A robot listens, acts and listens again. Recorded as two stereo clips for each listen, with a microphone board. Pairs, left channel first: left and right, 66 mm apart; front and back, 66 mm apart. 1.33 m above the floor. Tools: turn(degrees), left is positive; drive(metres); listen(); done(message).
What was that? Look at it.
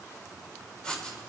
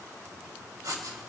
turn(degrees=165)
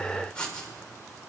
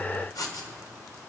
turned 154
turn(degrees=15)
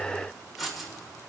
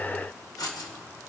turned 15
done("Found it: writing, straight ahead, 2 to 4 m away.")